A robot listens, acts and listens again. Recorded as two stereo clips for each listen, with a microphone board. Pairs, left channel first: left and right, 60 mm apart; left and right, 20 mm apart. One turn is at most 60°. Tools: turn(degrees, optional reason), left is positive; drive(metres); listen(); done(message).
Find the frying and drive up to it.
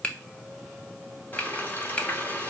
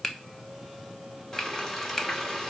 turn(degrees=30, reason="The frying: about 30° left or 150° left.")
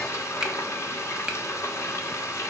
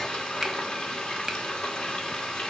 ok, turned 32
turn(degrees=60, reason="So it is at 115° left.")
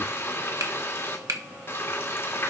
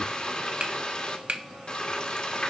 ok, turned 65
turn(degrees=50, reason="The frying is now 50° left.")
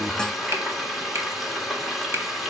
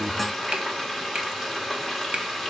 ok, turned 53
drive(metres=1.0)
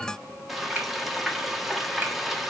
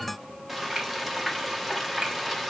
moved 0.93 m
drive(metres=1.0)
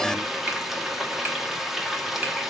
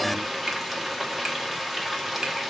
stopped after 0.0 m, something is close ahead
done("I am next to the frying.")